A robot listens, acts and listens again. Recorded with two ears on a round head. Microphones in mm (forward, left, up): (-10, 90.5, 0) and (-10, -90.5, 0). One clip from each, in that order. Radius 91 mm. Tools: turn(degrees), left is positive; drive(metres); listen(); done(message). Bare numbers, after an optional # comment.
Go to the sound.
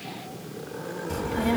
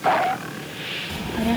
turn(-30)
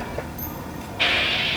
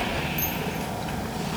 # So it is at 145° right.
turn(-145)
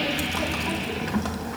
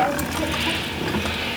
drive(1.0)
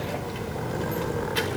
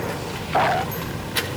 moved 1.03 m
# The child speaking is now 20° right.
turn(-20)
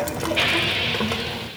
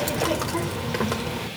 drive(1.0)
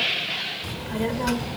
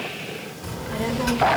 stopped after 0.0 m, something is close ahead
done("Arrived at the child speaking, straight ahead.")